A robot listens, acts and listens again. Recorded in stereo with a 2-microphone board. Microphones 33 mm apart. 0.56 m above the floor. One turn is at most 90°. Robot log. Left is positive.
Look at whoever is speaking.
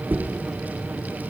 cmd idle
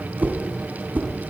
cmd idle
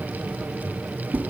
end: I can't make out anyone speaking to turn to.